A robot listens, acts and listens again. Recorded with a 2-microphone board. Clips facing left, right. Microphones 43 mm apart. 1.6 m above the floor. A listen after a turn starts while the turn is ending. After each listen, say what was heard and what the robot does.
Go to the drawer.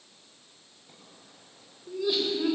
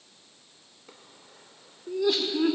The drawer: about 70° right or 110° right. Turn 70° right.
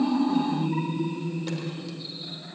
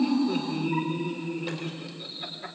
Keep listening.
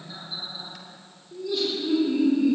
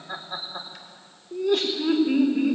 Keep listening.
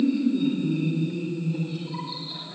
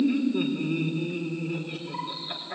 I heard a drawer, but can't make it out now. It was about straight ahead or 40° right. I did not reach it.